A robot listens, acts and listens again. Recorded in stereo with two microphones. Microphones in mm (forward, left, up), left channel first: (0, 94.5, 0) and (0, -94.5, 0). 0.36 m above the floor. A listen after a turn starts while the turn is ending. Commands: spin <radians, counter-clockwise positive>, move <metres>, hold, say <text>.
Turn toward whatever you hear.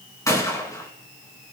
spin 0.26
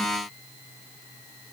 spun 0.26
hold
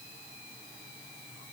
say I heard a gunshot, but can't make it out now. It was about straight ahead or 150° left.